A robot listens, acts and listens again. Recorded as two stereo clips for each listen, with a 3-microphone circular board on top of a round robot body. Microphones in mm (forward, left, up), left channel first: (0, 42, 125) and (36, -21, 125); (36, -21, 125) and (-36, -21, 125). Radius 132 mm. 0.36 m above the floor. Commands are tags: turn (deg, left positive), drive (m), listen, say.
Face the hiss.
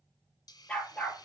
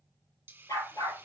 <turn deg="120"/>
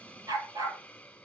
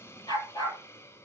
<turn deg="45"/>
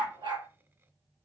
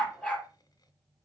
<listen/>
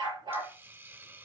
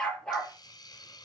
<say>Found it: a hiss, straight ahead, 2 to 4 m away.</say>